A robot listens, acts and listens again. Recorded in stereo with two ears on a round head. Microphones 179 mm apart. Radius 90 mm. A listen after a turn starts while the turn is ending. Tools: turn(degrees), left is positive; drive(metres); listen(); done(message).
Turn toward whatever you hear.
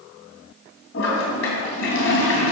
turn(degrees=65)
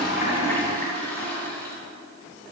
turn(degrees=10)
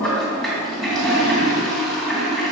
done("Facing the toilet flushing.")